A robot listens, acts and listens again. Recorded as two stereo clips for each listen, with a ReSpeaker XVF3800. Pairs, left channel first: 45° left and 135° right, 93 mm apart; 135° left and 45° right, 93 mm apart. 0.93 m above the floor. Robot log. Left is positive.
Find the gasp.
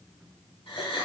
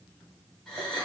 note: The gasp: 50° left.
cmd yaw +50
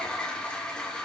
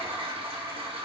end: Facing where the gasp came from. I can't hear it now.